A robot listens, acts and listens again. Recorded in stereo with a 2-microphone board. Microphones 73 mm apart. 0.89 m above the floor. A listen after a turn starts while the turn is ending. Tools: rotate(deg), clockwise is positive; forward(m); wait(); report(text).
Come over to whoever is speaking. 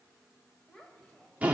rotate(-30)
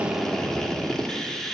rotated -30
wait()
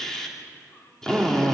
wait()
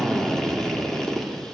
report("I heard a child speaking, but can't make it out now. It was about 20° right or 140° left. I did not reach it.")